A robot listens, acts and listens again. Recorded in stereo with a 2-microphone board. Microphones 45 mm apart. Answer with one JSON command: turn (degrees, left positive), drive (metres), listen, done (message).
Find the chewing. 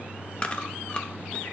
{"turn": 25}
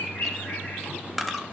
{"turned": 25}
{"done": "Found it: chewing, straight ahead."}